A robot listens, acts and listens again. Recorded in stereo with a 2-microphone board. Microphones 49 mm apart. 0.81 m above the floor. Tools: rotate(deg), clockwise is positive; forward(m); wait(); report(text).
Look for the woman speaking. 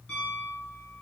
wait()
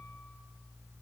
wait()
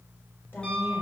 rotate(-45)
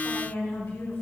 rotate(-75)
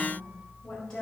rotate(-15)
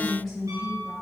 report("Facing the woman speaking.")